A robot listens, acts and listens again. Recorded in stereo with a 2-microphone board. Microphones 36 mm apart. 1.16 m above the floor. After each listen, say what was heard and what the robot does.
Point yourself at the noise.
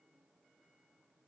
Keep listening.
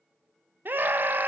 The scream: about 60° right or 120° right. Turn 60° right.
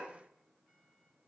Keep listening.
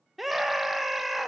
Found it: a scream, straight ahead.